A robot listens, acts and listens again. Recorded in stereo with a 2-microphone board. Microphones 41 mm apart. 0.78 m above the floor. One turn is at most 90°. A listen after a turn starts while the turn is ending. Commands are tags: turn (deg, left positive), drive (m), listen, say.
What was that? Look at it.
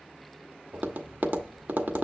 <turn deg="-55"/>
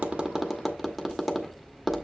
<say>Facing the tapping, 1 to 2 m away.</say>